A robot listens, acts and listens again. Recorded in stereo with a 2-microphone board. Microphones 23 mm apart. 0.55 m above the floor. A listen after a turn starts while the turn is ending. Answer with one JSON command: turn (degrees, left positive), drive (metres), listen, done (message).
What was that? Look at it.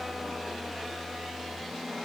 {"listen": true}
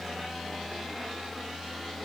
{"listen": true}
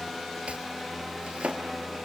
{"turn": -55}
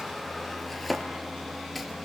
{"done": "Facing the chopping."}